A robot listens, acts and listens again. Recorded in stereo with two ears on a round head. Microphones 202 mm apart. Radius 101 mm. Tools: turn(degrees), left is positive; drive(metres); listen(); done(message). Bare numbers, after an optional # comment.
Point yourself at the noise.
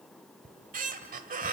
# The squeak: about 35° right or 145° right.
turn(-35)
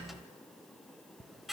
done("Found it: a squeak, straight ahead.")